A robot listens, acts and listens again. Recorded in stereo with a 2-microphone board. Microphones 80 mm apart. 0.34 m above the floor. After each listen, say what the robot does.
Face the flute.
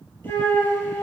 Turn 35° left.
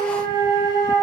Turn 110° left.
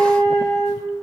Turn 25° left.
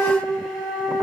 Found it: a flute, straight ahead.